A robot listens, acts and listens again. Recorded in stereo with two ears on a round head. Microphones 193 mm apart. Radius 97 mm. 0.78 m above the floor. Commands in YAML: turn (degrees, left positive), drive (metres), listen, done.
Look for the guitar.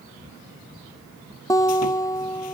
turn: 15
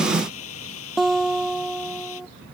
done: "Facing the guitar."